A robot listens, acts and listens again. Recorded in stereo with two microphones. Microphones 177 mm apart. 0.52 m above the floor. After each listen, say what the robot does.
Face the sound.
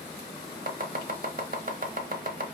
Turn 50° right.
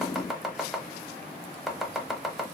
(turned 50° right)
Found it: chopping, straight ahead.